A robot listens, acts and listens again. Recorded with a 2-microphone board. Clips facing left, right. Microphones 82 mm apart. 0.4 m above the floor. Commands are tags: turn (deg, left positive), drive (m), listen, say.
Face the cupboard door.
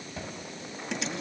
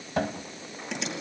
<turn deg="-70"/>
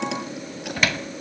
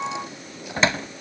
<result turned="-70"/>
<turn deg="-30"/>
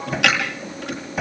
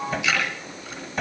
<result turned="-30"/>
<say>Facing the cupboard door.</say>